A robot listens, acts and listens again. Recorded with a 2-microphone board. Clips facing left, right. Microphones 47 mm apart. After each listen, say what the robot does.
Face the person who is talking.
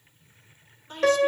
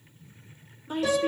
Turn 30° right.
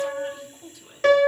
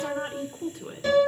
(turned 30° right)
Turn 140° right.
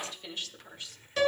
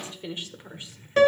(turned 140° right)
Turn 25° right.
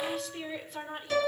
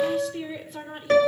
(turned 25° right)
Facing the woman speaking.